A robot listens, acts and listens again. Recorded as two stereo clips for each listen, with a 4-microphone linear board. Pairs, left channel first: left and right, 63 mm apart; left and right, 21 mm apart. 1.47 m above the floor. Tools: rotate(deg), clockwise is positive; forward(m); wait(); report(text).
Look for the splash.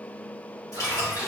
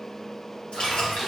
rotate(-50)
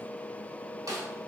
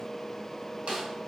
wait()
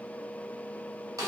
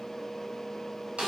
report("I heard a splash, but can't make it out now. It was about straight ahead or 80° left.")